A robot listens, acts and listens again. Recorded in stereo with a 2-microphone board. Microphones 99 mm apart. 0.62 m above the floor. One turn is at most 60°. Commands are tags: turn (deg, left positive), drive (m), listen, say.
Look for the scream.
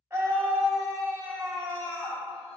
<turn deg="-25"/>
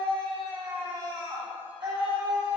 <turn deg="-60"/>
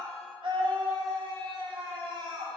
<turn deg="-60"/>
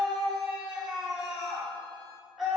<say>Found it: a scream, straight ahead, 1 to 2 m away.</say>